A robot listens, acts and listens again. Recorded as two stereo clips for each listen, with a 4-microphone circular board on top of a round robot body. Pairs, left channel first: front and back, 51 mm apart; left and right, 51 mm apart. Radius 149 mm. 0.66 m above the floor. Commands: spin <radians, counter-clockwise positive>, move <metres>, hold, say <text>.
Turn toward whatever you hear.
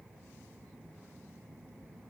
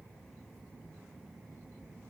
hold
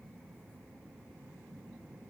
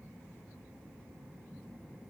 hold
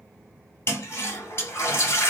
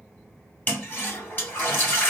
spin 0.70
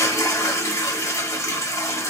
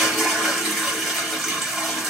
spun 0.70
say Found it: a toilet flushing, straight ahead, 1 to 2 m away.